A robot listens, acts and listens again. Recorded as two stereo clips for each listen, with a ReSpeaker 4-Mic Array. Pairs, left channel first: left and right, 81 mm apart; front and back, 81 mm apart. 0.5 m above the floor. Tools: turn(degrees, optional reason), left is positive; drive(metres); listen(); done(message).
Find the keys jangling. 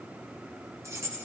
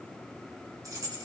turn(degrees=-145, reason="The keys jangling: 145° right.")
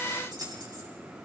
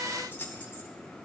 turn(degrees=-65, reason="The keys jangling is now 65° right.")
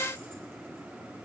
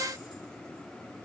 listen()
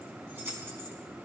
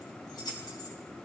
turn(degrees=-30, reason="The keys jangling is now 30° right.")
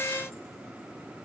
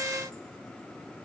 listen()
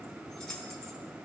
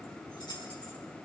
turn(degrees=10, reason="The keys jangling is now 10° left.")
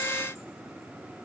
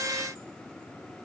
listen()
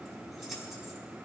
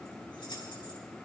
done("Facing the keys jangling, over 4 m away.")